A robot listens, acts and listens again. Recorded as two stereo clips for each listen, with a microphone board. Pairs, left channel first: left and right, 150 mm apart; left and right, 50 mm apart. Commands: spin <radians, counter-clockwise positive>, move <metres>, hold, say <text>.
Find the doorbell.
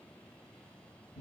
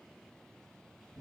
hold
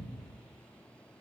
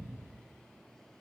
hold
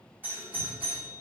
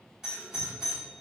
spin -0.52
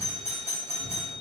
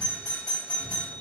spin 0.35
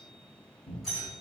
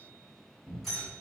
say Found it: a doorbell, straight ahead, 1 to 2 m away.